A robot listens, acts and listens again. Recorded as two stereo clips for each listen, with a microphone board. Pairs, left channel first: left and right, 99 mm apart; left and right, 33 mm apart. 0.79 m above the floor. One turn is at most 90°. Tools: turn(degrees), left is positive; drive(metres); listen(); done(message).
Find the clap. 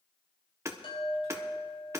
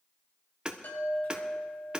listen()
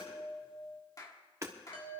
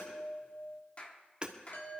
turn(degrees=35)
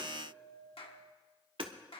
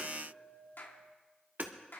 turn(degrees=90)
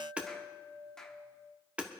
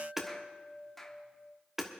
done("Found it: a clap, straight ahead.")